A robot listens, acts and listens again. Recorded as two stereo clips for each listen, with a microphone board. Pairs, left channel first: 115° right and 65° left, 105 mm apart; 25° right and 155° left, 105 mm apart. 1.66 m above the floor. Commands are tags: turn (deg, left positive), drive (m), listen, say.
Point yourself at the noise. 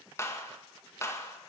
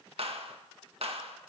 <turn deg="-175"/>
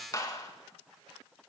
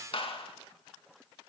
<turn deg="-55"/>
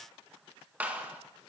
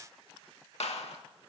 <turn deg="-10"/>
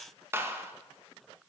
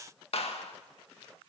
<say>Facing the clap, 1 to 2 m away.</say>